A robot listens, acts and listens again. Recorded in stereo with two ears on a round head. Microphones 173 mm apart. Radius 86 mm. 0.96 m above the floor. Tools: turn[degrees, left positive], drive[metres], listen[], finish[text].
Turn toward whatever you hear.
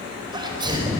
Thought: The sneeze: about 25° right or 155° right.
Action: turn[-25]
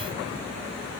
Action: listen[]
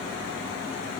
Action: finish[I heard a sneeze, but can't make it out now. It was about straight ahead or 130° right.]